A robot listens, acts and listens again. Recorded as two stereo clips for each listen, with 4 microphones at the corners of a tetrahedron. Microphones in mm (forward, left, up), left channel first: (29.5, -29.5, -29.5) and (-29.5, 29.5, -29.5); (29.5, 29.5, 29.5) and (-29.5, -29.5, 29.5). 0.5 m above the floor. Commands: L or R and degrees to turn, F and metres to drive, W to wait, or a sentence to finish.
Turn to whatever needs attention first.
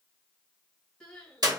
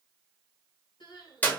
L30
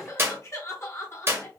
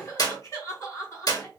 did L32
Found it: crying, straight ahead, 2 to 4 m away.